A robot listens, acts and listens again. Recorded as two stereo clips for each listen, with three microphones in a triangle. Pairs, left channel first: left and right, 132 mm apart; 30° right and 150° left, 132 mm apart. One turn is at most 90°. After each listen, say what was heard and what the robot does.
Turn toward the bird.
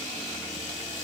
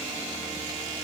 Keep listening.
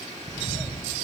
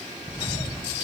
The bird: 15° left. Turn 15° left.
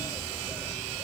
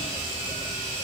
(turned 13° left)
Facing the bird.